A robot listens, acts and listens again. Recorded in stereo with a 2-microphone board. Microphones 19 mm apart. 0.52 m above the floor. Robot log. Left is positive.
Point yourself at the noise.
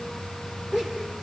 note: The laughter: about 20° right or 160° right.
cmd yaw -20
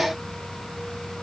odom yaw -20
cmd idle
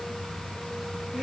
cmd idle
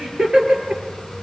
note: So it is at 130° right.
cmd yaw -130
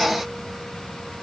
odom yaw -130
cmd idle
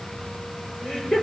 note: The laughter is now 40° left.
cmd yaw +40
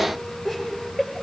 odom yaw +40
end: Facing the laughter.